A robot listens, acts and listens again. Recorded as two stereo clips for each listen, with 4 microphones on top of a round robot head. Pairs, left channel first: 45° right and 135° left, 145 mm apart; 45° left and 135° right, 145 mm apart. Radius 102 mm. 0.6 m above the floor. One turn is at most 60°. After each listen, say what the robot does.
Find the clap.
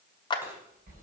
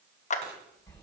Turn 10° left.
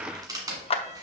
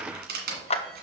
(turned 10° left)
Facing the clap, under 1 m away.